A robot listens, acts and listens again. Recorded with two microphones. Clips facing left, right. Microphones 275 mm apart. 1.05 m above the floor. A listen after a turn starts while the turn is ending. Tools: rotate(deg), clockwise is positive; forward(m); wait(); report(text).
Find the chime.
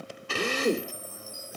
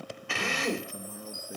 rotate(-30)
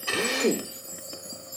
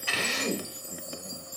rotate(-145)
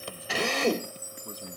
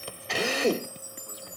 rotate(-35)
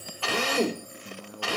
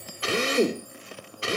wait()
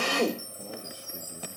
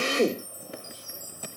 rotate(-15)
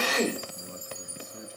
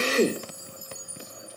report("Found it: a chime, straight ahead, 2 to 4 m away.")